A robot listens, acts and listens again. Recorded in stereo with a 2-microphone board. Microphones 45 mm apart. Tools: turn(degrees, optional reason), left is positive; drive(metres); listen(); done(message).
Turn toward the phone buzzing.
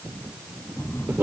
turn(degrees=75, reason="The phone buzzing: about 75° left or 105° left.")
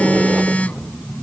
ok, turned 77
turn(degrees=30, reason="So it is at 30° left.")
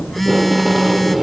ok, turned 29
done("Facing the phone buzzing.")